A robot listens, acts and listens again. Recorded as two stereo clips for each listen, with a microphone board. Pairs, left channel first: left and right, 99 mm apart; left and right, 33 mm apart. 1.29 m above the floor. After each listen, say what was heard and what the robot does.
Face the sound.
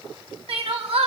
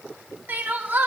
Turn 90° right.
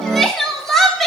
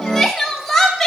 Found it: crying, straight ahead, 2 to 4 m away.